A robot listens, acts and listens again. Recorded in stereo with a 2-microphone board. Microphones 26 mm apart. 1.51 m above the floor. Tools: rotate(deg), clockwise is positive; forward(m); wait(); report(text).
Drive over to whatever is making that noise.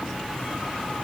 wait()
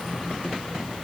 wait()
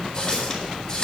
rotate(-25)
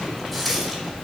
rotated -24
forward(1.0)
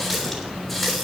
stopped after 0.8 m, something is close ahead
report("Blocked. The running tap is further on, straight ahead.")